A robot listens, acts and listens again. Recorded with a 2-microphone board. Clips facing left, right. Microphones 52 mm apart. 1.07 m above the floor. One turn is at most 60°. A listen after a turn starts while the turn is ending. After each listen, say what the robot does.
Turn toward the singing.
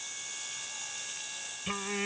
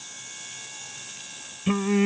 Turn 20° right.
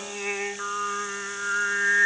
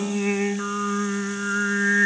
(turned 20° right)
Facing the singing.